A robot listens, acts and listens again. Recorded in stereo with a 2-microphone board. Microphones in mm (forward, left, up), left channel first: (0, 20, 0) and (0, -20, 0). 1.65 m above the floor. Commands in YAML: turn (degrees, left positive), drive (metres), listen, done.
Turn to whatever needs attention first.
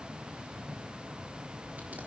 listen: true
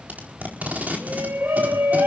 turn: -75
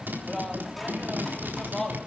done: "Facing the shout."